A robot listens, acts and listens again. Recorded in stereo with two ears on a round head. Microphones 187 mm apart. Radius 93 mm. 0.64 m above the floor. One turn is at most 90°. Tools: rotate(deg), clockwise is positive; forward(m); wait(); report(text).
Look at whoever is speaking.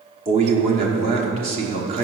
rotate(30)
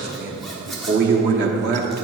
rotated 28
rotate(90)
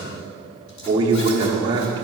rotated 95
rotate(25)
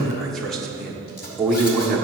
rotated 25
report("Found it: a man speaking, straight ahead, 1 to 2 m away.")